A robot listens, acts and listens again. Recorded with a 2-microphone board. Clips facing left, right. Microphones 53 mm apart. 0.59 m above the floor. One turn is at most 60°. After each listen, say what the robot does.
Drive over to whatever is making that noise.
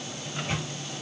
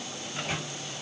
Turn 25° right.
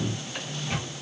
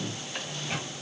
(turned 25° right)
Drive 1.0 m forward.
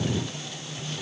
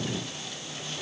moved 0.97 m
Keep listening.
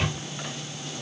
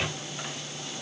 Drive 1.0 m forward.
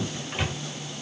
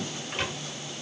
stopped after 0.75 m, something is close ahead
I am next to the microwave.